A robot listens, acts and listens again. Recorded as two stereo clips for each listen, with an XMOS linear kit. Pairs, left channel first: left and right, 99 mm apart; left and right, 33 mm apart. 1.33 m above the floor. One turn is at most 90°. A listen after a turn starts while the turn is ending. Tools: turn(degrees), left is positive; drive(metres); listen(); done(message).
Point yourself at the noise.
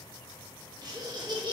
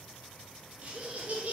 turn(degrees=-50)
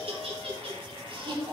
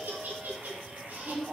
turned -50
turn(degrees=-55)
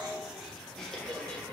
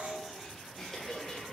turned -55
turn(degrees=15)
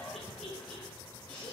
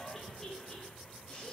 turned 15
turn(degrees=15)
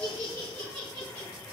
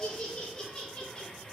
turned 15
turn(degrees=15)
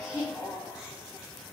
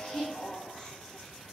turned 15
done("Found it: laughter, straight ahead.")